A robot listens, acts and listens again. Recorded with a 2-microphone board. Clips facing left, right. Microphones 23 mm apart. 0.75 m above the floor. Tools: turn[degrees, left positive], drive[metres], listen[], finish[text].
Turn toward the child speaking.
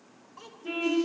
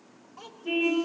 Action: turn[30]
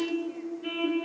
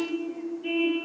Action: listen[]
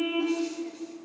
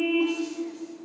Action: listen[]
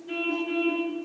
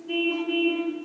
Action: finish[I heard a child speaking, but can't make it out now. It was about 30° right or 150° left.]